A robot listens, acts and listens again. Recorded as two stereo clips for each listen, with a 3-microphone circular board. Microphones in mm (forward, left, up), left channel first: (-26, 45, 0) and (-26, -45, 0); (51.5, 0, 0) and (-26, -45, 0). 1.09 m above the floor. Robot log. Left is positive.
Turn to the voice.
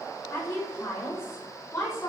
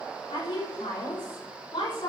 note: The woman speaking: 35° left.
cmd yaw +35
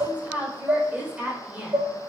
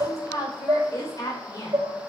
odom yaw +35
note: The woman speaking is now 15° right.
cmd yaw -15
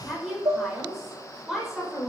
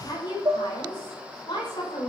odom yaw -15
end: Found it: a woman speaking, straight ahead.